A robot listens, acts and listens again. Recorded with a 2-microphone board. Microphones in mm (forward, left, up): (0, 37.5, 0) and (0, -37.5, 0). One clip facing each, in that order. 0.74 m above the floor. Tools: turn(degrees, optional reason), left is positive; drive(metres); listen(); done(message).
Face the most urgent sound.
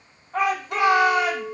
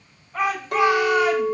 turn(degrees=55, reason="The shout: about 55° left or 125° left.")
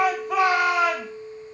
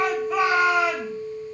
turn(degrees=70, reason="So it is at 70° left.")
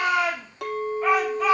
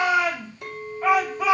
turn(degrees=-10, reason="The shout is now 10° right.")
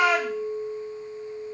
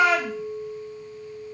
done("Facing the shout.")